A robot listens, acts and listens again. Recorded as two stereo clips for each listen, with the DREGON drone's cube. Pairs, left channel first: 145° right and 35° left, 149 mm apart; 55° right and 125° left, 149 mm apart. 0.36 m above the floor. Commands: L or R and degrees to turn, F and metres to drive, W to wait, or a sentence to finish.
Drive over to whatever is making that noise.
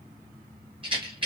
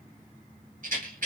L90
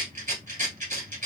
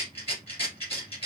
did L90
F1.0
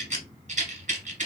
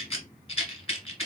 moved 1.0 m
F1.0
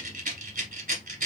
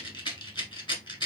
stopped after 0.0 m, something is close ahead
Arrived at the rattle, straight ahead.